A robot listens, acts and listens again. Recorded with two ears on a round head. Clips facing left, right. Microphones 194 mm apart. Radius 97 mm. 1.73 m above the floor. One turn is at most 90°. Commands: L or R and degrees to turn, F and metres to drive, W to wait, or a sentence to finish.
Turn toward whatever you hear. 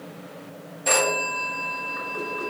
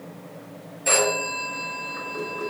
R30
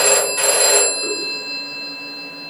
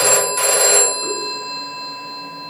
R90
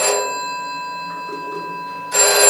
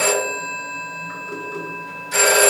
R40
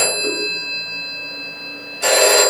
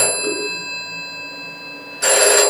R15
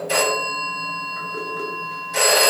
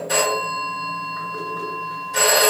Facing the phone ringing, 1 to 2 m away.